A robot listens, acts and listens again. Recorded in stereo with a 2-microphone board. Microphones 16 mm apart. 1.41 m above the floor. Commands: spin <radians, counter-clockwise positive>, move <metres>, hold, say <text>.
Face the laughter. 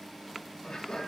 spin 1.05
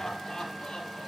spin 1.22
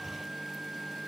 hold
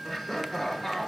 spin 0.35
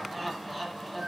spin 0.17
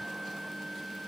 hold
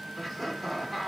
say Facing the laughter.